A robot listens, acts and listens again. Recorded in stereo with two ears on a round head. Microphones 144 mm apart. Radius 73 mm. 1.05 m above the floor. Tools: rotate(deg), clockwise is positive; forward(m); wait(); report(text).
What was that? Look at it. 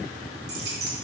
rotate(75)
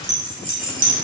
rotate(55)
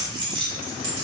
rotate(35)
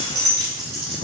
rotate(35)
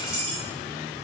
report("Facing the keys jangling.")